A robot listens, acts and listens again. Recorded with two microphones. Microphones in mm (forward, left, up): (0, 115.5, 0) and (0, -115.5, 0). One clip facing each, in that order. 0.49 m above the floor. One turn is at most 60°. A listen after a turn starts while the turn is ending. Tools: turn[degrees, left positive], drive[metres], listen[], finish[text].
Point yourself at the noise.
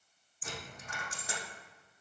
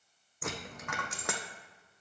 Thought: The dropped coin: about 75° right or 105° right.
Action: turn[-60]
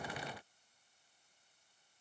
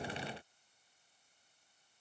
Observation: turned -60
Action: listen[]
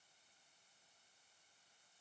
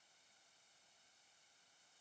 Action: finish[I heard a dropped coin, but can't make it out now. It was about 15° right or 45° right.]